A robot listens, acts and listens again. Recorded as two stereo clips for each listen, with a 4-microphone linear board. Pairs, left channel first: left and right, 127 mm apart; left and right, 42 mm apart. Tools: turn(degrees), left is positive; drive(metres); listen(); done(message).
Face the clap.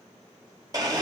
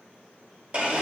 listen()
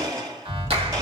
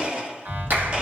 turn(degrees=-50)
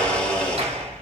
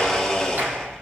turn(degrees=-70)
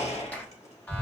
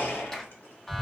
turn(degrees=15)
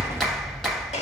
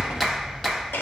done("Found it: a clap, straight ahead.")